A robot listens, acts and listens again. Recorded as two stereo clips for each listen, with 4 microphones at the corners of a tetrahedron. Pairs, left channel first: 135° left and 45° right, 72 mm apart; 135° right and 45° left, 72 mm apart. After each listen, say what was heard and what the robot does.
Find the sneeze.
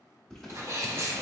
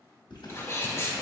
The sneeze: 85° right. Turn 85° right.
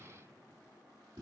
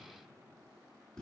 Facing where the sneeze came from. I can't hear it now.